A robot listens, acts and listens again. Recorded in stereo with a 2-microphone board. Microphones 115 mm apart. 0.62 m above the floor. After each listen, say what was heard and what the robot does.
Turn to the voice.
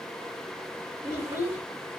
The child speaking: about 30° right or 150° right. Turn 30° right.
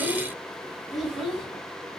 Found it: a child speaking, straight ahead, 2 to 4 m away.